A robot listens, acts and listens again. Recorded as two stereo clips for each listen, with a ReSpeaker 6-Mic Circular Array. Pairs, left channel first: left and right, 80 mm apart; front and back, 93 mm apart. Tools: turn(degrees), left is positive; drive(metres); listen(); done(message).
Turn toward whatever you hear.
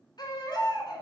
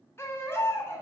turn(degrees=60)
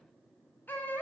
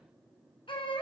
turn(degrees=20)
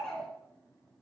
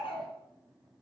done("Facing the baby crying.")